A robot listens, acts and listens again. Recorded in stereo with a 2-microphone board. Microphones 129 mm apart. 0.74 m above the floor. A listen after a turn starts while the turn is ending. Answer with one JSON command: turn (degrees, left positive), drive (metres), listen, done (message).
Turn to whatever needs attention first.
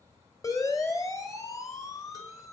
{"turn": 25}
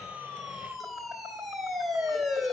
{"done": "Found it: a siren, straight ahead."}